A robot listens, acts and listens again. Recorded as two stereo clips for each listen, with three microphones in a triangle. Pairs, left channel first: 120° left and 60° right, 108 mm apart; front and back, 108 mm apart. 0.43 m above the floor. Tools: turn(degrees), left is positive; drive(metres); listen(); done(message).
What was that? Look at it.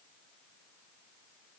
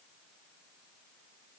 listen()
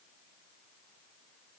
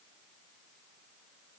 listen()
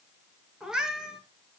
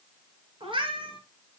turn(degrees=-145)
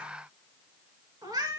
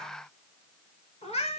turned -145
turn(degrees=-10)
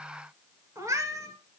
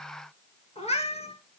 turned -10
done("Facing the cat meowing, 2 to 4 m away.")